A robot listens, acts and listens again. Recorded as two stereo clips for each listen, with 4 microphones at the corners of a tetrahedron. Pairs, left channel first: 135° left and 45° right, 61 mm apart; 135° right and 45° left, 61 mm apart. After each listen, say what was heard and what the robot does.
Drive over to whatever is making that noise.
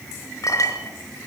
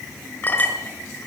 The clink: 165° left. Turn 165° left.
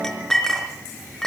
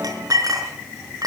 The clink is now 55° left. Turn 55° left.
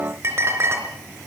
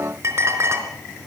Drive 1.0 m forward.
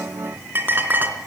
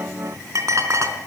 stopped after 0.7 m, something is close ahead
The clink is now 15° left. Turn 15° left.
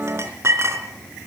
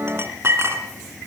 Blocked. The clink is further on, straight ahead.